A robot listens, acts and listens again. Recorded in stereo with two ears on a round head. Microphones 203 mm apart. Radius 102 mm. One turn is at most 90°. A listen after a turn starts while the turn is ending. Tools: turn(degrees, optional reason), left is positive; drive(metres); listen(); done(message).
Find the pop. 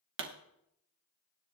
turn(degrees=-60, reason="The pop: about 60° right or 120° right.")
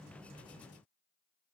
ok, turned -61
listen()
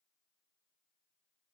done("I heard a pop, but can't make it out now. It was about straight ahead or 60° right.")